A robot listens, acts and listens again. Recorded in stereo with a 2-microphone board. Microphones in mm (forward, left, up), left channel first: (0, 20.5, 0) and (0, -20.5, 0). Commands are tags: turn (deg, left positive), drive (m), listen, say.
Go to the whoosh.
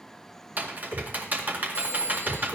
<turn deg="30"/>
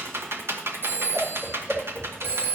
<drive m="1.0"/>
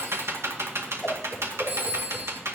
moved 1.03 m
<drive m="1.0"/>
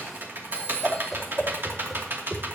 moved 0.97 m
<drive m="1.0"/>
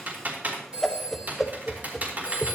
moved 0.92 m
<drive m="1.0"/>
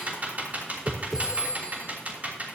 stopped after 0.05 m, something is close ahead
<say>Arrived at the whoosh, straight ahead.</say>